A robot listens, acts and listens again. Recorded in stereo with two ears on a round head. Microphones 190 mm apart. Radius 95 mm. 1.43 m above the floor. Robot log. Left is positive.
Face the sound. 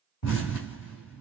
note: The explosion: about 60° left or 120° left.
cmd yaw +60
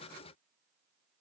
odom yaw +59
cmd idle
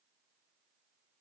end: I heard an explosion, but can't make it out now. It was about 5° left or 60° left.